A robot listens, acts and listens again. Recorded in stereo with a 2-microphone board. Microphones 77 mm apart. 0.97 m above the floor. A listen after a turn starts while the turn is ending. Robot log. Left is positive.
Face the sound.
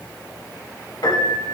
note: The piano: about 65° left or 115° left.
cmd yaw +65
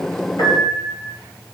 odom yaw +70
note: So it is at 45° left.
cmd yaw +45
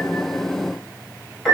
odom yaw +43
end: Found it: a piano, straight ahead, 2 to 4 m away.